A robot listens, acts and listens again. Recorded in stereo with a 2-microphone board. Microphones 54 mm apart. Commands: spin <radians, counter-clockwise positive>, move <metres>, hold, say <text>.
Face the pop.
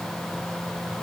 hold
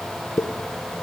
spin 1.22
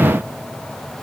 hold
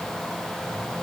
say I heard a pop, but can't make it out now. It was about straight ahead or 40° left.